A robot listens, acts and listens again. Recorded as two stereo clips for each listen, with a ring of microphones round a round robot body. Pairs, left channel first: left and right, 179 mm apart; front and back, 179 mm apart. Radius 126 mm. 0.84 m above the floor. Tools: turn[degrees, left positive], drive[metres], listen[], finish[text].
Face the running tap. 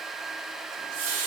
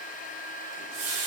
Thought: The running tap: 135° right.
Action: turn[-135]
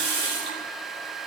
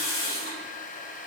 Thought: The running tap is now 30° right.
Action: turn[-30]
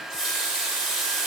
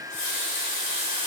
Action: finish[Facing the running tap, 2 to 4 m away.]